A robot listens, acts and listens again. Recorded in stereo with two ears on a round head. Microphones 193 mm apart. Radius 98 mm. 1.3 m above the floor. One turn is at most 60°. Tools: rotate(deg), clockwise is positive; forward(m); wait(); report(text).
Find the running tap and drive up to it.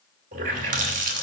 rotate(40)
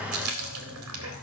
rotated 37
rotate(60)
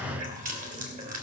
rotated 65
rotate(40)
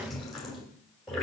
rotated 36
forward(1.0)
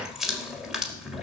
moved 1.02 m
forward(1.0)
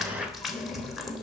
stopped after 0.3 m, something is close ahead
report("I am next to the running tap.")